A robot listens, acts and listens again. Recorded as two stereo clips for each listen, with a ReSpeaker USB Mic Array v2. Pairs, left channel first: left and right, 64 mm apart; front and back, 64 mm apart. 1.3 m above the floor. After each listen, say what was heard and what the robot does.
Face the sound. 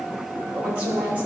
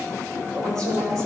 The woman speaking: 155° right. Turn 155° right.
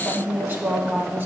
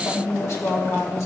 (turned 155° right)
The woman speaking is now 35° right. Turn 35° right.
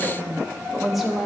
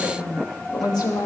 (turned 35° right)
Found it: a woman speaking, straight ahead.